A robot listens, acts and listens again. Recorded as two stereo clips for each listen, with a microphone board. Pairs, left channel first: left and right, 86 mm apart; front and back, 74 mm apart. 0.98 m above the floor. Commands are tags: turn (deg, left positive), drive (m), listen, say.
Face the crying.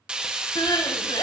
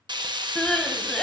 <turn deg="75"/>
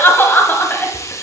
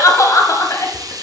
<turn deg="30"/>
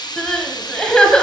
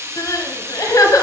<turn deg="10"/>
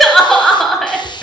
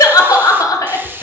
<say>Found it: crying, straight ahead.</say>